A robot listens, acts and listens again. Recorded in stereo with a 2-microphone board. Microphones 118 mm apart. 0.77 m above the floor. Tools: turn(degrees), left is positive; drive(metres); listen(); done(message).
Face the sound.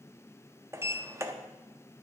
turn(degrees=-25)
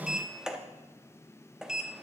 done("Found it: a sliding door, straight ahead, 1 to 2 m away.")